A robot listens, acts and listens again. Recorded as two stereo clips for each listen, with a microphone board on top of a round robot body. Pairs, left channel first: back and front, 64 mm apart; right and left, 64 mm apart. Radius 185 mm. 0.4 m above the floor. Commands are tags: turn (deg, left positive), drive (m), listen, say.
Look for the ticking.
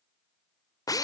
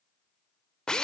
<listen/>
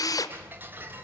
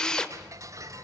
<turn deg="60"/>
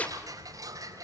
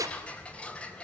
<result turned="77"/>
<turn deg="-20"/>
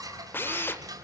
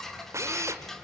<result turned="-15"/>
<say>Facing the ticking, 2 to 4 m away.</say>